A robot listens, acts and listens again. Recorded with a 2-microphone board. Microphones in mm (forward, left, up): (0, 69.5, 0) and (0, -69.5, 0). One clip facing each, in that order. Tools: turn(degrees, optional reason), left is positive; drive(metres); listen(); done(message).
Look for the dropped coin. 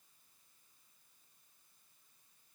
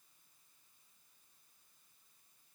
listen()
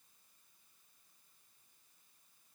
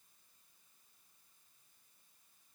listen()
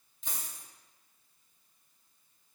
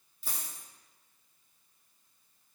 turn(degrees=-30)
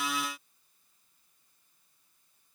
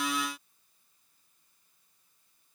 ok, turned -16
listen()
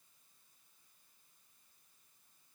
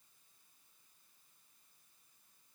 done("I heard a dropped coin, but can't make it out now. It was about 10° left or 160° right.")